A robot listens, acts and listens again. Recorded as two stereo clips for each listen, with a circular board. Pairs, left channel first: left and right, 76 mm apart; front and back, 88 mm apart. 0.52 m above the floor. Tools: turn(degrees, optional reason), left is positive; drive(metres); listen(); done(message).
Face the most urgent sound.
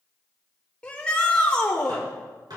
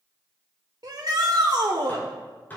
turn(degrees=165, reason="The shout: 165° left.")
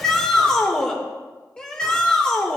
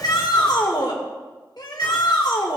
turn(degrees=15, reason="The shout is now 15° left.")
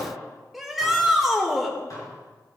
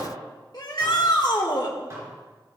done("Found it: a shout, straight ahead, 1 to 2 m away.")